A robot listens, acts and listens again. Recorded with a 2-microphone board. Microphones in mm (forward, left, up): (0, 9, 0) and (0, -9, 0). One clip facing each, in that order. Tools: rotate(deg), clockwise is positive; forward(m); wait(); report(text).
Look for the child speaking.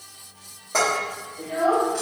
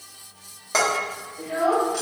rotate(55)
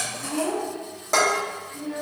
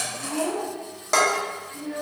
rotate(55)
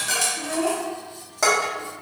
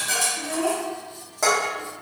rotate(-10)
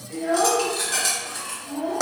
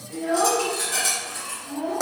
rotate(-10)
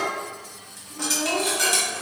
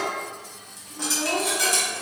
wait()
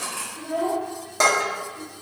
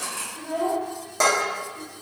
report("Facing the child speaking.")